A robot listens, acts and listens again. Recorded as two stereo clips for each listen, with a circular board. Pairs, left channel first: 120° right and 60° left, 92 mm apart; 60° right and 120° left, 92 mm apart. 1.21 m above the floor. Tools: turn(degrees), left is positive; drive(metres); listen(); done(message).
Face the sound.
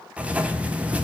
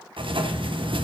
turn(degrees=135)
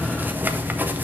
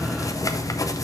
turn(degrees=-10)
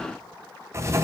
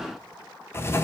done("Facing the writing, under 1 m away.")